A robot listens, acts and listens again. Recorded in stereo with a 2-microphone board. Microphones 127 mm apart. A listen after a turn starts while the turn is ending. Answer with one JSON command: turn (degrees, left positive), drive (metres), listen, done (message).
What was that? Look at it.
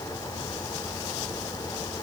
{"listen": true}
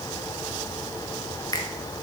{"turn": 30}
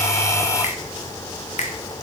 {"turn": 120}
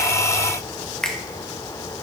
{"done": "Found it: a finger snap, straight ahead, 1 to 2 m away."}